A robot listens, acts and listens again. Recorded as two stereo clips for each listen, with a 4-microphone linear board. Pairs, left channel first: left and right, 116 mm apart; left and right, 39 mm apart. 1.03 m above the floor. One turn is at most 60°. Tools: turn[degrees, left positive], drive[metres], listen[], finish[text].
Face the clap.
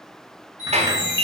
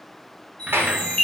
Action: turn[-60]
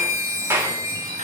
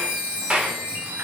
Thought: So it is at 25° right.
Action: turn[-25]
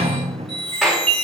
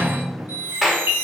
Action: finish[Facing the clap, 2 to 4 m away.]